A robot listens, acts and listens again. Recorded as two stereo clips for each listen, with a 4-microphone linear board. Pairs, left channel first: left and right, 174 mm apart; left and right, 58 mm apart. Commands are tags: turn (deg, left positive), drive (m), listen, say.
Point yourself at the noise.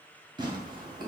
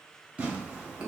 <turn deg="-25"/>
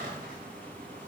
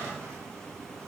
<turn deg="-130"/>
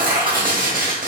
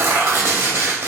<turn deg="-50"/>
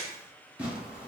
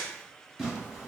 <say>Found it: tearing paper, straight ahead.</say>